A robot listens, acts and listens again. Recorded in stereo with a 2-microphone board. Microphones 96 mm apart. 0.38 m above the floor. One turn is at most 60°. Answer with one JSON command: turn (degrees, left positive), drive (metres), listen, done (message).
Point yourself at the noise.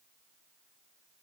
{"listen": true}
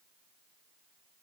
{"listen": true}
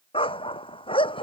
{"turn": 60}
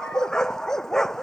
{"done": "Found it: a dog barking, straight ahead."}